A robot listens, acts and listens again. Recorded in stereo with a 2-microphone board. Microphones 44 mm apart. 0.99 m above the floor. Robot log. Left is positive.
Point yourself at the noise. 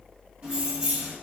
note: The keys jangling: about 20° right or 160° right.
cmd yaw -20
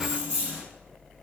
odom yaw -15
note: The keys jangling: about 25° right or 155° right.
cmd yaw -25
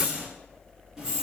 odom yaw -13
cmd yaw -30
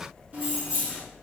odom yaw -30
note: The keys jangling: about 25° right or 155° right.
cmd yaw -25
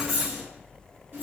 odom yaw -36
note: So it is at 135° right.
cmd yaw -135
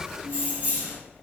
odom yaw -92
note: The keys jangling is now 40° right.
cmd yaw -40
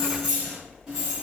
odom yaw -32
note: The keys jangling is now 10° right.
cmd yaw -10
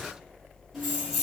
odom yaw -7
end: Facing the keys jangling, 1 to 2 m away.